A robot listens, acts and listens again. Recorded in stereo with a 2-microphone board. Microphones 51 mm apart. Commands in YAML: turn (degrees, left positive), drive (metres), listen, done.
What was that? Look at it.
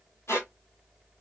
turn: 70
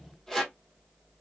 done: "Facing the squeak, 1 to 2 m away."